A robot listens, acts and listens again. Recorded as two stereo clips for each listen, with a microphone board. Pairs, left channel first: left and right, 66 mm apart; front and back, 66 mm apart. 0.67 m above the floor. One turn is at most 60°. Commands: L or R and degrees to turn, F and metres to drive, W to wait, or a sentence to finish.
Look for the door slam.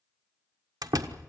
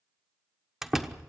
R60
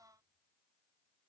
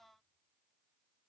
R35
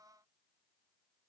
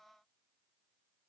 I heard a door slam from this way, but can't make it out now.